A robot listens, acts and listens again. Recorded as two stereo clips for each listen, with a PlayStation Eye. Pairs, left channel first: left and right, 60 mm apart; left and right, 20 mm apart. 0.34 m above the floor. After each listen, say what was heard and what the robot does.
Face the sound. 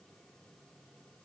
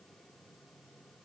Keep listening.
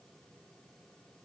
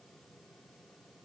Keep listening.
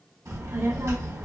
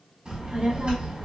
The child speaking: about 60° right or 120° right. Turn 60° right.
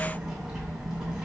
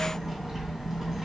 So it is at 10° right. Turn 10° right.
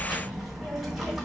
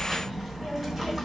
Facing the child speaking.